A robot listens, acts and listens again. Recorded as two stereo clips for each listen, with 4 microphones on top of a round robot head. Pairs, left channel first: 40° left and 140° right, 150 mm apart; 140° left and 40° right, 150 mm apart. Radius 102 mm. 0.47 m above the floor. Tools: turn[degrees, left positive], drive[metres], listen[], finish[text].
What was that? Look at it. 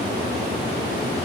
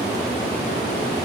Action: listen[]
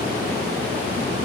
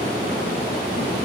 Action: listen[]
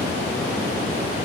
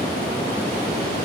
Action: finish[I can't make out anything to turn to.]